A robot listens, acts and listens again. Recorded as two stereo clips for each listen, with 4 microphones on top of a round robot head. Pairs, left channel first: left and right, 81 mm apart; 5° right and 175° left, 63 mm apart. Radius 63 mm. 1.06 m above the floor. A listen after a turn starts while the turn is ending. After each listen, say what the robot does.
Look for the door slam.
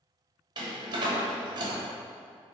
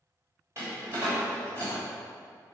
Turn 120° right.
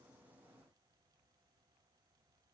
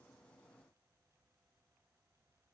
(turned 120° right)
Facing where the door slam came from. I can't hear it now.